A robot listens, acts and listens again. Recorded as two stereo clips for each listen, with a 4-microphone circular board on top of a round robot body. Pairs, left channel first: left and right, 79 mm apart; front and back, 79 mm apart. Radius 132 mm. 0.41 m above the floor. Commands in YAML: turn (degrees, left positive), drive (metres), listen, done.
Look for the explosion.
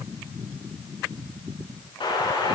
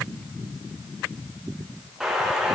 turn: 95
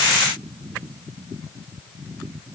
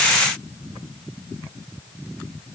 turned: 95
done: "Facing where the explosion came from. I can't hear it now."